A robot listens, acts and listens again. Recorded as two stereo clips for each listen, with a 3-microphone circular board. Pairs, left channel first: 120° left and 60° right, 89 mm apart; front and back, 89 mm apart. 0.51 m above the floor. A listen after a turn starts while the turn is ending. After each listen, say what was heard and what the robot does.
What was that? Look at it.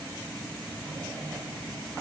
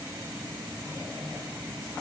Keep listening.
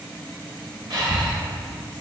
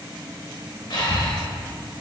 The breathing: 30° right. Turn 30° right.
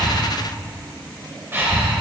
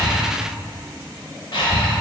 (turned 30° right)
Facing the breathing.